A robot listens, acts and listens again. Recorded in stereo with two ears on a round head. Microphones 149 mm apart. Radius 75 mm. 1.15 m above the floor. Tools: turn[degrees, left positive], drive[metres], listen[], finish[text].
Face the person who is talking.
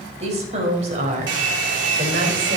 Thought: The woman speaking: about 40° right or 140° right.
Action: turn[-40]
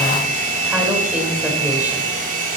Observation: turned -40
Action: listen[]
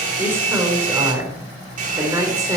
Thought: So it is at 20° right.
Action: turn[-20]
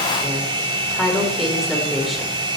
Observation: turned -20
Action: finish[Facing the woman speaking, 2 to 4 m away.]